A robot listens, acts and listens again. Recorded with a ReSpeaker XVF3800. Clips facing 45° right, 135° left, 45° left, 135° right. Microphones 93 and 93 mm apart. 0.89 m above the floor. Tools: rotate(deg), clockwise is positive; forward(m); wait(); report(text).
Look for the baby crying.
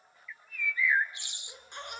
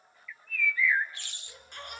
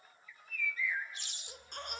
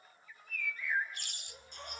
rotate(-25)
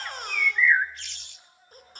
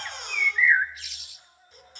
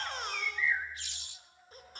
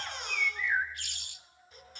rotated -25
report("Facing the baby crying.")